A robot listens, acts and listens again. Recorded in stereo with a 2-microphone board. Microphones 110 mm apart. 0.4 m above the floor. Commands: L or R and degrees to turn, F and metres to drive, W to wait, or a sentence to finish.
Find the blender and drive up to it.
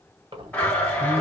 L30
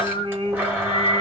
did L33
R20
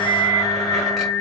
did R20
W
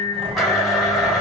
F1.0
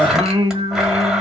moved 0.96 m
F1.0
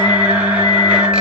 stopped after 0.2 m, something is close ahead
W
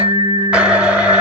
R10
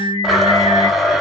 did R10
I am next to the blender.